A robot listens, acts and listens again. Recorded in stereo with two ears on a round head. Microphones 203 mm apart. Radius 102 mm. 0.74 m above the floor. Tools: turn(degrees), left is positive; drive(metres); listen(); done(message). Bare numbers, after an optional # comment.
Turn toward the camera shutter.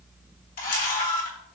# The camera shutter: about 40° left or 140° left.
turn(40)
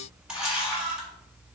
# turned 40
done("Facing the camera shutter, 1 to 2 m away.")